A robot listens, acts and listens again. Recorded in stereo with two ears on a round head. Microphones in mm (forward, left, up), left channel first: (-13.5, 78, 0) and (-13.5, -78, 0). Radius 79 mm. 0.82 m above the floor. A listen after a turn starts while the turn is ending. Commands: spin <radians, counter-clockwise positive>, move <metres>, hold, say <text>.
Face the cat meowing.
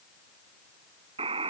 hold
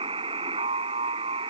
hold
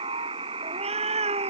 spin -0.70
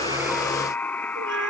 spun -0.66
spin -1.66
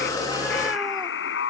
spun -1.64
hold
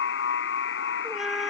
say Facing the cat meowing.